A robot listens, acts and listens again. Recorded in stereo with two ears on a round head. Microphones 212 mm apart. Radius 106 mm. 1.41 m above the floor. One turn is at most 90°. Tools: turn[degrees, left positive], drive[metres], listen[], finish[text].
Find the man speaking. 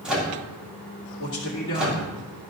Thought: The man speaking: about 60° left or 120° left.
Action: turn[60]
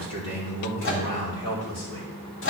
Thought: So it is at 80° left.
Action: turn[80]
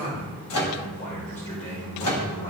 Thought: The man speaking is now 30° left.
Action: turn[30]
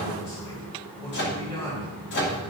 Thought: The man speaking is now 15° left.
Action: turn[15]
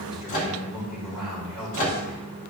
Action: finish[Found it: a man speaking, straight ahead.]